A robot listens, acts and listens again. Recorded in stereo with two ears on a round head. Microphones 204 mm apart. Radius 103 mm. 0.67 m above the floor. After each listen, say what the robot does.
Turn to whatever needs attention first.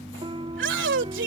Turn 55° right.
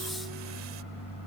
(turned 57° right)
Keep listening.
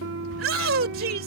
Turn 65° right.
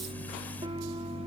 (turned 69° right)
Keep listening.
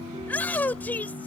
Turn 10° left.
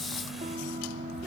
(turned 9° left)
Keep listening.
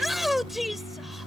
Facing the shout.